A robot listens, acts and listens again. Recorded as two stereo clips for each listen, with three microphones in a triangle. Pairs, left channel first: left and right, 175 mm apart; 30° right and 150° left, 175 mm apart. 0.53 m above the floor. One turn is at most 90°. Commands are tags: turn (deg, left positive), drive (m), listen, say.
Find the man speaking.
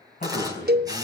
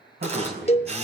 <turn deg="90"/>
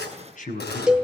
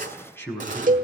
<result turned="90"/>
<turn deg="50"/>
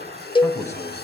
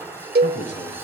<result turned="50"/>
<turn deg="15"/>
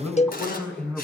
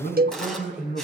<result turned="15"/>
<say>Found it: a man speaking, straight ahead, over 4 m away.</say>